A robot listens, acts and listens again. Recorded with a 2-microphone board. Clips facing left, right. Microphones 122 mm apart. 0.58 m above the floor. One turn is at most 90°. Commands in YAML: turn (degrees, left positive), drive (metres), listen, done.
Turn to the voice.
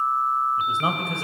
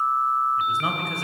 turn: 25
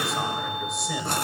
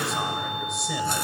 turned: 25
listen: true
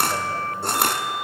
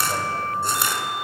listen: true
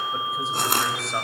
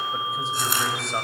done: "I heard a man speaking, but can't make it out now. It was about straight ahead or 130° left."